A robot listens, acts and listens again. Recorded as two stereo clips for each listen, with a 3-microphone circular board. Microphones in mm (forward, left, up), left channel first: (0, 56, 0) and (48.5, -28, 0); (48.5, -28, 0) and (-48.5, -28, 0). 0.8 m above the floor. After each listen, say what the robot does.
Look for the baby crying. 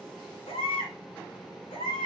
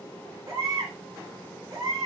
Turn 125° left.
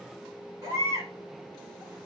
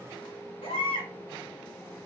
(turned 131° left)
Found it: a baby crying, straight ahead.